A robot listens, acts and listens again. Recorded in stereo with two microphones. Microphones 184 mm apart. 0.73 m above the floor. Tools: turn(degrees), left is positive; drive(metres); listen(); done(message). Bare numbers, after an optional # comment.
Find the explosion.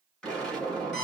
turn(30)
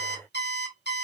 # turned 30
listen()
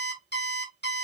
done("I heard an explosion, but can't make it out now. It was about 25° right or 145° left.")